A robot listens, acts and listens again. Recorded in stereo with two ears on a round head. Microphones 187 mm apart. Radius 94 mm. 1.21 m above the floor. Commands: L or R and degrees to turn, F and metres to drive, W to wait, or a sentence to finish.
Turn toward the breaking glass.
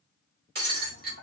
R55
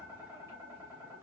W
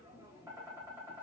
I heard breaking glass, but can't make it out now. It was about straight ahead or 70° right.